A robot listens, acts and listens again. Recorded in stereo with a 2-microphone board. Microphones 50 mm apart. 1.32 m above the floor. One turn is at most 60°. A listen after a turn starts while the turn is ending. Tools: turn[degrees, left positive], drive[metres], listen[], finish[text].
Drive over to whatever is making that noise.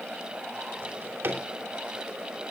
Thought: The drawer: about 55° right or 125° right.
Action: turn[-55]
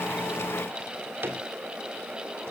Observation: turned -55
Thought: So it is at 70° right.
Action: turn[-60]
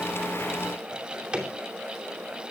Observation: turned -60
Thought: The drawer is now 20° right.
Action: turn[-20]
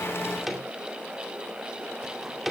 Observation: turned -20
Action: drive[1.0]
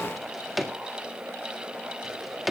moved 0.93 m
Action: drive[1.0]
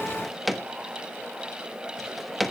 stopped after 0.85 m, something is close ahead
Action: finish[Arrived at the drawer, straight ahead.]